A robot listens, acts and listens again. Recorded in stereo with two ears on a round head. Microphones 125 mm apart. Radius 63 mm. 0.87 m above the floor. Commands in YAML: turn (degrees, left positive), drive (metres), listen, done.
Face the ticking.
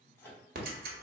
turn: -75
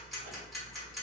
done: "Found it: ticking, straight ahead, 1 to 2 m away."